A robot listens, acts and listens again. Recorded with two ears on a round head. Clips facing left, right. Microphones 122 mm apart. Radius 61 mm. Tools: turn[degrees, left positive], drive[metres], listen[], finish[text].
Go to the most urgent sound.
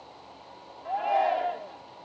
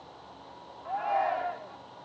Thought: The shout: about 35° left or 145° left.
Action: turn[35]
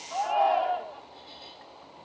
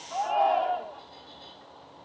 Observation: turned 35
Action: drive[1.0]
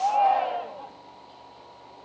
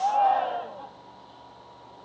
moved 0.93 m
Thought: The shout is now 10° left.
Action: turn[10]
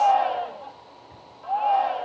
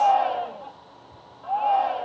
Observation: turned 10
Action: drive[1.0]
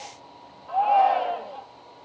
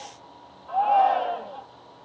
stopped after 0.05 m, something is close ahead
Action: finish[I am next to the shout.]